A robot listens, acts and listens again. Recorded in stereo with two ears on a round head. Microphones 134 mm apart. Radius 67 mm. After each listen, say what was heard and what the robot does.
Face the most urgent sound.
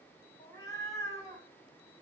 Keep listening.
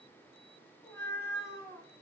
Keep listening.
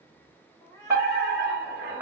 Turn 30° right.
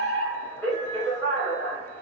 So it is at 20° left. Turn 20° left.
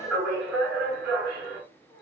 Facing the fire alarm.